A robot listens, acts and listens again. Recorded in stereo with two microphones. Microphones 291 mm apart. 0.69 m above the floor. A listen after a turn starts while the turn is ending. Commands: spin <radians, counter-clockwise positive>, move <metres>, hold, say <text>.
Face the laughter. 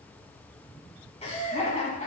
spin 0.44
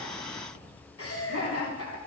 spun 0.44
spin 2.18
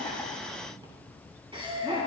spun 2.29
spin -0.35
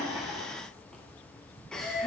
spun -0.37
say Found it: laughter, straight ahead, over 4 m away.